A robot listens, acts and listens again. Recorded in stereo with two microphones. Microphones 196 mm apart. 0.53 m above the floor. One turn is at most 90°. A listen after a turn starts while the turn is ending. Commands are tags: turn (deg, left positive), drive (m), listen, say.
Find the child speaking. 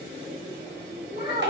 <turn deg="65"/>
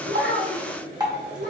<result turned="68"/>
<turn deg="60"/>
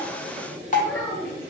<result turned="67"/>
<turn deg="10"/>
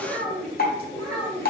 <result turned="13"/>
<turn deg="15"/>
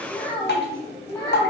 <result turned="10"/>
<turn deg="10"/>
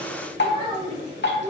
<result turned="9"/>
<say>Facing the child speaking, 2 to 4 m away.</say>